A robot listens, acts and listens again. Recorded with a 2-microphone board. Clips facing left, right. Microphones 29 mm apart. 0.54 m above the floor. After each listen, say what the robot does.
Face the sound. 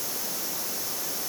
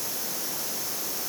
Keep listening.
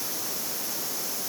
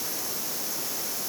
Keep listening.
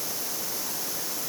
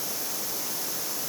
I can't make out anything.